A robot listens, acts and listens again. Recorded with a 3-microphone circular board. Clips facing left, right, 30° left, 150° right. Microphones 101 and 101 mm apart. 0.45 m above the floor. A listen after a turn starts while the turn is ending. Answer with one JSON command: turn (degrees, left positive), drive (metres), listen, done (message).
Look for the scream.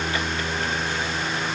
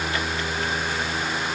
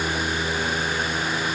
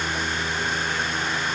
{"listen": true}
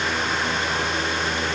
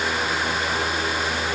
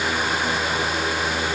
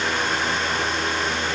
{"listen": true}
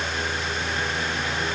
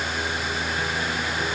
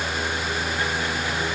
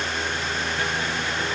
{"done": "I can't make out a scream to turn to."}